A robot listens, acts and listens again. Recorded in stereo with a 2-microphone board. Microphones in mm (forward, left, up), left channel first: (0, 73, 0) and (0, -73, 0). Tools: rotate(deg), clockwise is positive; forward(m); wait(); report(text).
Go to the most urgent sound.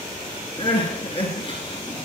rotate(-40)
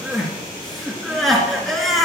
forward(1.0)
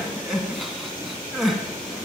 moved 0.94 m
forward(1.0)
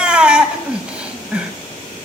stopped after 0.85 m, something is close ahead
report("Arrived at the crying, straight ahead.")